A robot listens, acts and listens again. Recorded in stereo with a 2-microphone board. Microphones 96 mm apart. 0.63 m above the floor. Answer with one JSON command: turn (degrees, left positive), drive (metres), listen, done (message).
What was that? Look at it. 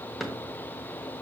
{"turn": 30}
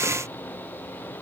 {"listen": true}
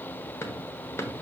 {"turn": 150}
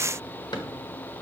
{"turn": 50}
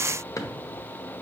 {"turn": 40}
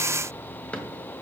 {"turn": 15}
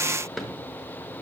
{"done": "Facing the drawer, 1 to 2 m away."}